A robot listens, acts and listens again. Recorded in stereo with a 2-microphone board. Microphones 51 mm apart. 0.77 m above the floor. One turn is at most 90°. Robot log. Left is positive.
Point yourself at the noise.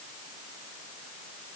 cmd idle
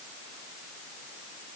cmd idle
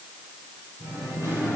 cmd yaw -90
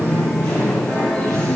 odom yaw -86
end: Found it: singing, straight ahead, over 4 m away.